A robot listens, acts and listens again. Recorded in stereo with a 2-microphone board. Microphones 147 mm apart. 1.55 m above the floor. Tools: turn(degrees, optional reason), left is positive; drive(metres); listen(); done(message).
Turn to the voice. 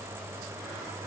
listen()
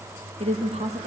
turn(degrees=-50, reason="The woman speaking: about 50° right or 130° right.")
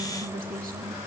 turn(degrees=-75, reason="So it is at 75° right.")
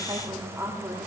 turn(degrees=-15, reason="The woman speaking is now 15° right.")
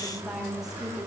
done("Facing the woman speaking, over 4 m away.")